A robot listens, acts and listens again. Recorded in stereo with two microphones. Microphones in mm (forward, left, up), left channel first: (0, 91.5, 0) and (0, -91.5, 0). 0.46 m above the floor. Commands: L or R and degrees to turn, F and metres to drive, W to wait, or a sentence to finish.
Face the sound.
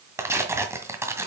R30
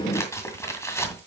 L15
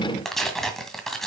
Facing the tearing paper.